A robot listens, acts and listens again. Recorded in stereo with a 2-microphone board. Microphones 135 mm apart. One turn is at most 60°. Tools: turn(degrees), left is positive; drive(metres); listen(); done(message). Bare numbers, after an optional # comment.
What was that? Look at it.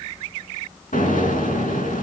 turn(60)
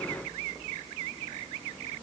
# Nothing new. It was at 30° left.
turn(30)
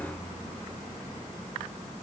done("Facing where the explosion came from. I can't hear it now.")